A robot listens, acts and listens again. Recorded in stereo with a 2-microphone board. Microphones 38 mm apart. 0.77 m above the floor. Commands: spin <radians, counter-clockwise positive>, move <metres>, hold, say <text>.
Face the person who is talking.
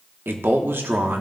spin -1.22
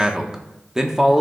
spin -0.26
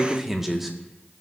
say Found it: a man speaking, straight ahead, 1 to 2 m away.